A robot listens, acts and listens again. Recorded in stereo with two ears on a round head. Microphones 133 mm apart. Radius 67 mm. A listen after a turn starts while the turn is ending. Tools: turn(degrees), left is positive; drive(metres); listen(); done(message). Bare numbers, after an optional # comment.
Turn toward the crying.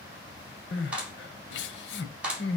turn(90)
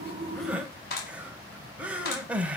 # So it is at 10° right.
turn(-10)
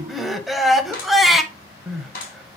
done("Found it: crying, straight ahead, under 1 m away.")